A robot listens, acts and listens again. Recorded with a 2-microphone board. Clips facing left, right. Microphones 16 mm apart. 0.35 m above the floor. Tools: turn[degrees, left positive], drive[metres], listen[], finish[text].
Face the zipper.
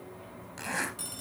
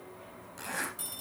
Thought: The zipper: about 35° left or 145° left.
Action: turn[35]
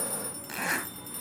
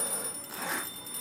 Thought: So it is at 105° left.
Action: turn[105]
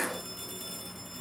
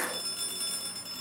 Action: finish[Facing the zipper.]